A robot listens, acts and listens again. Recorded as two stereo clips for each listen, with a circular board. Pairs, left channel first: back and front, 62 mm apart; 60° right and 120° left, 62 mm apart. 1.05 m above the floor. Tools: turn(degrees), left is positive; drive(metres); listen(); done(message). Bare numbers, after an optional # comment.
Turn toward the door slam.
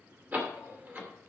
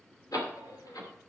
# The door slam: 60° right.
turn(-60)
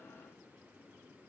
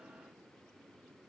done("I heard a door slam from this way, but can't make it out now.")